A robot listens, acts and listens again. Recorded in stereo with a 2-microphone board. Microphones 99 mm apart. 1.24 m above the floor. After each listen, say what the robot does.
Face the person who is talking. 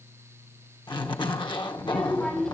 Turn 30° left.
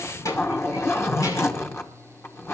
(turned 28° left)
Turn 145° left.
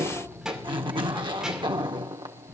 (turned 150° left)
Found it: a child speaking, straight ahead.